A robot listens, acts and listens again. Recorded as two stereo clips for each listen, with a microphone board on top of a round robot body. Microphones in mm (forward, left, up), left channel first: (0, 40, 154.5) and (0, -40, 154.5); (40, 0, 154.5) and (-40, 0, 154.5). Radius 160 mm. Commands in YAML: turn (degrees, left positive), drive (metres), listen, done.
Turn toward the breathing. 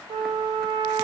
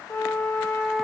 listen: true
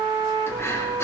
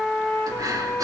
turn: 145
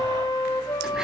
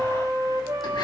listen: true
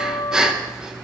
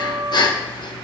turn: -10
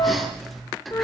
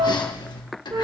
done: "Facing the breathing."